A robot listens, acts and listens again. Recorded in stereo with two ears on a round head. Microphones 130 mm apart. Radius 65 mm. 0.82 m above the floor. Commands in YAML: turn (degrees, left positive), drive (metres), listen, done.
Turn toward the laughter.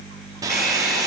listen: true
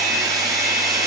listen: true
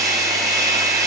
done: "I can't make out laughter to turn to."